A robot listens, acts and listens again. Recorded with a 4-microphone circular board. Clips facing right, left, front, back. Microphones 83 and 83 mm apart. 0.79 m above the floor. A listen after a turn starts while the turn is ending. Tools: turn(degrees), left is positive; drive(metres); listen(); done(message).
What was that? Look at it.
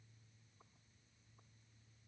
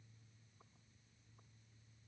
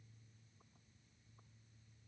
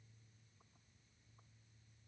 listen()
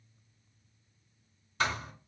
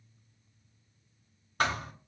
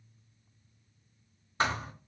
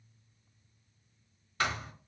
turn(degrees=60)
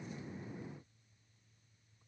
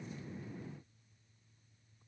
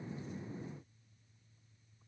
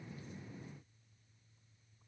done("Facing where the thud came from. I can't hear it now.")